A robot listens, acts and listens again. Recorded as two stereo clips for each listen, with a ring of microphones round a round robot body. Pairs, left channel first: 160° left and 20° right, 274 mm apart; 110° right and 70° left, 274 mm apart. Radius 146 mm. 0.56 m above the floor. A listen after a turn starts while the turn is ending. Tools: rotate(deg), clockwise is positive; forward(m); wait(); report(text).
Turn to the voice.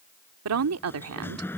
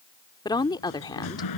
rotate(40)
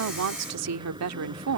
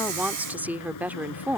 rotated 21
rotate(15)
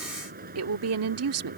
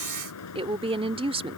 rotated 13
report("Found it: a woman speaking, straight ahead.")